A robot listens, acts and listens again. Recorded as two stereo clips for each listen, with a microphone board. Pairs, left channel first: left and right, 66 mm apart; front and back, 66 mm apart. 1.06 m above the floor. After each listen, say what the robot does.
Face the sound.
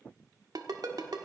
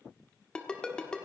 Turn 75° right.
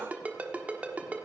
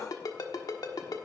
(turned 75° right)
Turn 25° right.
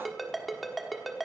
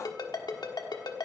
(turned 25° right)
Facing the ringtone, 1 to 2 m away.